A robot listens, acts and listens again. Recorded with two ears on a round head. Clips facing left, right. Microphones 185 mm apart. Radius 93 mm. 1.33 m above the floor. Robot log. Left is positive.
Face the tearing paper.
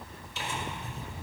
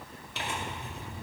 note: The tearing paper: about 55° right or 125° right.
cmd yaw -55
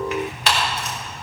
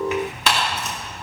note: So it is at 70° right.
cmd yaw -70
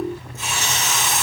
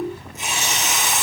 note: The tearing paper is now 15° right.
cmd yaw -15
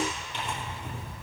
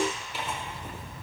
end: Facing the tearing paper.